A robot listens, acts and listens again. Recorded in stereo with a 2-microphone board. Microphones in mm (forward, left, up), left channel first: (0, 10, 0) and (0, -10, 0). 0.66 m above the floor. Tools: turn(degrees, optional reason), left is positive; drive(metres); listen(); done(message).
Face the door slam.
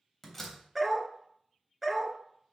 turn(degrees=30)
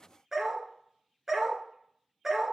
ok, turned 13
listen()
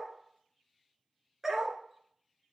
done("I heard a door slam, but can't make it out now. It was about 5° right or 160° left.")